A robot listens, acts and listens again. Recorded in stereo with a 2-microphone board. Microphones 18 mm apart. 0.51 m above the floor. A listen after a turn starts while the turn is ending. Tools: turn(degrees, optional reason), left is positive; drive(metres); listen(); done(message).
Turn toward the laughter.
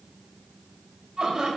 turn(degrees=-40, reason="The laughter: about 40° right or 140° right.")
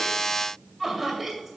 done("Found it: laughter, straight ahead, 2 to 4 m away.")